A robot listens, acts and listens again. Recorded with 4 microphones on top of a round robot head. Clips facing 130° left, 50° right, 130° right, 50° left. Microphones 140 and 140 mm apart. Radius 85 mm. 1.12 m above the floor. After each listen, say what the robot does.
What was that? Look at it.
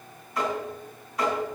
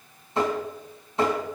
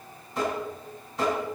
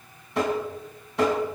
Turn 15° left.
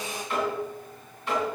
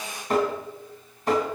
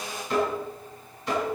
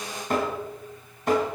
Found it: tapping, straight ahead.